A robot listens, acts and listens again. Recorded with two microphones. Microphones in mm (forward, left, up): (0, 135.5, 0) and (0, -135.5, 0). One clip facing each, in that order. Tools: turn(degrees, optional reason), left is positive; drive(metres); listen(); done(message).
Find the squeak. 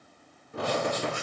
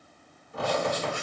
turn(degrees=65, reason="The squeak: about 65° left or 115° left.")
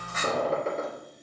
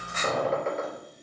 turn(degrees=40, reason="So it is at 40° left.")
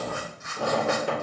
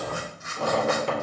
turn(degrees=10, reason="The squeak is now 10° left.")
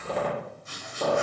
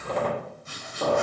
done("Facing the squeak, 2 to 4 m away.")